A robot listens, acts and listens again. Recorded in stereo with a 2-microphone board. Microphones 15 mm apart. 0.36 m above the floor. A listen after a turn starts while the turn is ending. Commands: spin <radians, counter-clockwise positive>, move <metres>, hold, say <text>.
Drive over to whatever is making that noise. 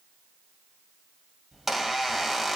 spin -0.52
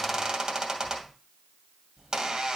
spin -2.36
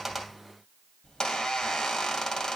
spin 0.79
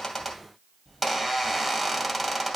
move 1.0
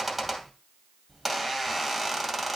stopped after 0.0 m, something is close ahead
say Something is in my way. I am facing the squeak but have not reached it.